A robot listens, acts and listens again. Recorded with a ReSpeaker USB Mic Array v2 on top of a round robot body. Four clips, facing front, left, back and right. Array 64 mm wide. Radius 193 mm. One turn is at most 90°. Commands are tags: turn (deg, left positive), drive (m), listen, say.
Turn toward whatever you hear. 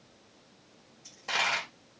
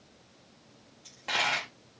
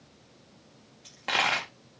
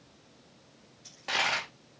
<turn deg="90"/>
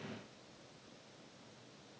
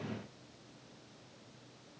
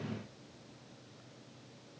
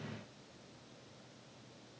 <turn deg="90"/>
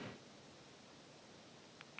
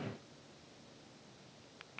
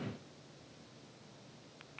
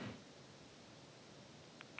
<say>Facing where the dropped coin came from. I can't hear it now.</say>